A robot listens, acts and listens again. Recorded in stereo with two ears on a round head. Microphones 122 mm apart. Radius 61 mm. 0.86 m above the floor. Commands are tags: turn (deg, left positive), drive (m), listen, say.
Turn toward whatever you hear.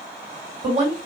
<turn deg="-45"/>
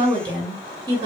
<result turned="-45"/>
<turn deg="-35"/>
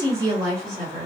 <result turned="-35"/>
<turn deg="-40"/>
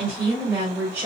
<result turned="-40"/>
<turn deg="-30"/>
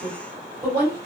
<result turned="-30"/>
<turn deg="-10"/>
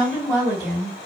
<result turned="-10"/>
<say>Found it: a woman speaking, straight ahead, 2 to 4 m away.</say>